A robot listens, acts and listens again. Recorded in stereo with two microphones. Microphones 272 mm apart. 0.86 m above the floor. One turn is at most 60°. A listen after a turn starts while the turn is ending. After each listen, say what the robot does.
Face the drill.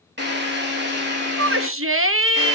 Turn 40° right.
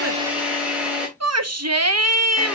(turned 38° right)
Found it: a drill, straight ahead, 2 to 4 m away.